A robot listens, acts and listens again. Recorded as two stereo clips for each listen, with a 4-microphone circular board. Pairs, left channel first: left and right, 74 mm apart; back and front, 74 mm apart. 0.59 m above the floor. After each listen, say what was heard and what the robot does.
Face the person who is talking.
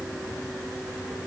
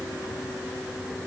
Keep listening.
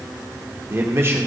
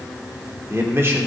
The man speaking: 45° right. Turn 45° right.
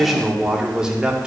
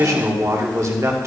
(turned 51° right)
The man speaking is now 20° right. Turn 20° right.
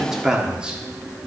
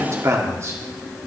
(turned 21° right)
The man speaking is now 20° right. Turn 20° right.
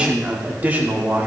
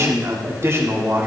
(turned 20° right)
The man speaking is now 40° right. Turn 40° right.
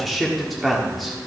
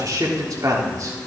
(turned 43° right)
Found it: a man speaking, straight ahead, 1 to 2 m away.